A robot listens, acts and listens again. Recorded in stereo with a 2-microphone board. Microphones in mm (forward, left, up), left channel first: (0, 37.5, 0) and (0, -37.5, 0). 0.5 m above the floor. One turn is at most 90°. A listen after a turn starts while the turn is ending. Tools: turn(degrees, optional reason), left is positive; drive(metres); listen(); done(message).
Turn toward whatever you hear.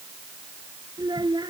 turn(degrees=-70, reason="The child speaking: about 70° right or 110° right.")
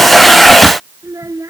turn(degrees=-45, reason="So it is at 45° right.")
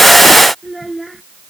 done("Found it: a child speaking, straight ahead.")